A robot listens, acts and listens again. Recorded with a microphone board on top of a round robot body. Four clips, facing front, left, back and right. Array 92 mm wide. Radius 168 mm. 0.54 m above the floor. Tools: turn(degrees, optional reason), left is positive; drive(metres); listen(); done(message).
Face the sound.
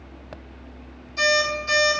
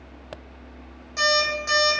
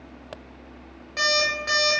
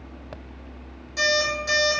turn(degrees=155, reason="The alarm clock: 155° left.")
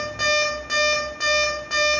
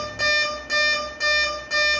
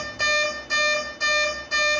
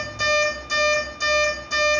turn(degrees=30, reason="The alarm clock is now 30° left.")
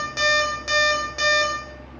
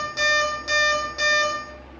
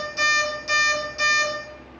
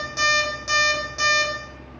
turn(degrees=-10, reason="The alarm clock is now 10° right.")
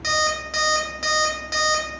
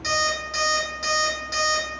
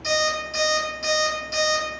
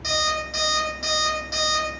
done("Facing the alarm clock.")